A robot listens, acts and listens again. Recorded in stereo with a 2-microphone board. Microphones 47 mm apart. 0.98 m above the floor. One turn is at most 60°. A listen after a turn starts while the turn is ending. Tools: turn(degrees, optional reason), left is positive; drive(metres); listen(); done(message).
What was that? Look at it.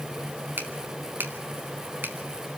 turn(degrees=-45, reason="The finger snap: about 45° right or 135° right.")
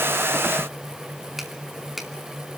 done("Facing the finger snap, 2 to 4 m away.")